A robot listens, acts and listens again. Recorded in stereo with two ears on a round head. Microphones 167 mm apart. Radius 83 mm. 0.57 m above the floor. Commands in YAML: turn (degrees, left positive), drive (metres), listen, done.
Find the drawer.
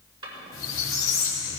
turn: -25
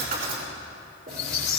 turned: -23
turn: -130
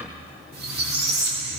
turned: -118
turn: -10
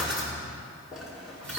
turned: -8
done: "Facing the drawer, over 4 m away."